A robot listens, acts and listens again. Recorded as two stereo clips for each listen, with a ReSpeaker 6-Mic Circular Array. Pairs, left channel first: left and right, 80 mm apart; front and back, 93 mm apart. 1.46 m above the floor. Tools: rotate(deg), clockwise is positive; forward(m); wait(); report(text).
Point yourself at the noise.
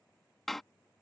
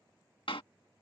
report("Found it: a door slam, straight ahead.")